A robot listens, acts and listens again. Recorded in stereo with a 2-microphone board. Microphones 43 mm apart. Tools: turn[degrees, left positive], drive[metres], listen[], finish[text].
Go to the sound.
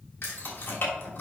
Thought: The keys jangling: about 60° left or 120° left.
Action: turn[60]
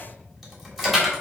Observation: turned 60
Action: drive[1.0]
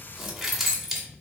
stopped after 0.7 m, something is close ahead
Action: finish[Blocked. The keys jangling is further on, straight ahead.]